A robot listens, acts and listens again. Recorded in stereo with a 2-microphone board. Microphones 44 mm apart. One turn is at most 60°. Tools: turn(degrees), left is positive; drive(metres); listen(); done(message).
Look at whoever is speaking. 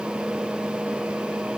listen()
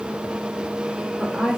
turn(degrees=-30)
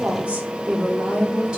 turn(degrees=-60)
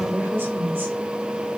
turn(degrees=-60)
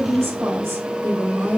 turn(degrees=-60)
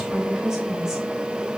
turn(degrees=-10)
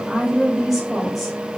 done("Found it: a woman speaking, straight ahead.")